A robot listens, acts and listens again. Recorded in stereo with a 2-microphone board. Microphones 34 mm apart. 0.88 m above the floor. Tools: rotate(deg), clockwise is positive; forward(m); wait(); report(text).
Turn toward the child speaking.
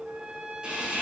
wait()
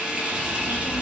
rotate(-30)
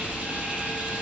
rotate(15)
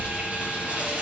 report("Facing the child speaking, over 4 m away.")